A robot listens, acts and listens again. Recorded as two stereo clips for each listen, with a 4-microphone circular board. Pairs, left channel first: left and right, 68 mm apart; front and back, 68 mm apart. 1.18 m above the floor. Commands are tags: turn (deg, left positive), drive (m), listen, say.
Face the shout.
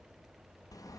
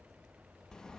<listen/>
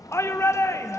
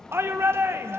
<turn deg="130"/>
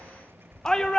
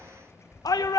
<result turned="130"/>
<turn deg="10"/>
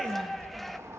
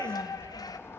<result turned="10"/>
<say>Facing the shout.</say>